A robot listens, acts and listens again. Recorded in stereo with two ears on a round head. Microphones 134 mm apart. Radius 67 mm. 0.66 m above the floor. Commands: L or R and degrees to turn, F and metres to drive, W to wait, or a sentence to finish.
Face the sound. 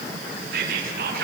R75
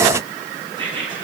R35
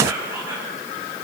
R15
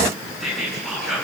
Found it: whispering, straight ahead.